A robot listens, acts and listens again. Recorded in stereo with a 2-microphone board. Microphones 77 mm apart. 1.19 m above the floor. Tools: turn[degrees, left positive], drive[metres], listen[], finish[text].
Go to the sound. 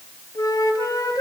Thought: The flute: about 55° left or 125° left.
Action: turn[55]
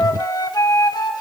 Thought: So it is at 65° left.
Action: turn[65]
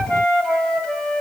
Thought: The flute is now 10° left.
Action: turn[10]
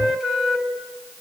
Action: drive[1.0]
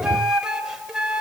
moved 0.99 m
Thought: The flute is now 10° right.
Action: turn[-10]
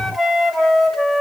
Action: drive[1.0]
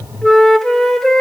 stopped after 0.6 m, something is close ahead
Action: finish[I am next to the flute.]